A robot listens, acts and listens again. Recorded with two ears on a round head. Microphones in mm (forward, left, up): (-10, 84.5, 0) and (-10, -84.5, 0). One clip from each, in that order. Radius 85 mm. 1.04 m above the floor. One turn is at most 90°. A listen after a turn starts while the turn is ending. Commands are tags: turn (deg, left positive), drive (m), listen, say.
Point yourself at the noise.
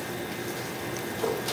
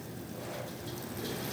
<listen/>
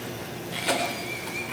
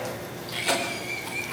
<turn deg="-30"/>
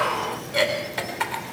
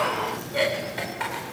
<turn deg="25"/>
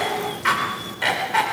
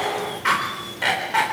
<say>Found it: a cough, straight ahead, over 4 m away.</say>